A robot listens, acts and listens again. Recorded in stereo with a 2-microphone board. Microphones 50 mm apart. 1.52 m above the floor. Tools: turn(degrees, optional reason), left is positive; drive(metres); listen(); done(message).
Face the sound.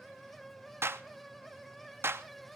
turn(degrees=-50, reason="The clap: about 50° right or 130° right.")
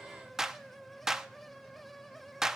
turn(degrees=-10, reason="So it is at 10° right.")
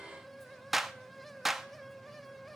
done("Facing the clap, under 1 m away.")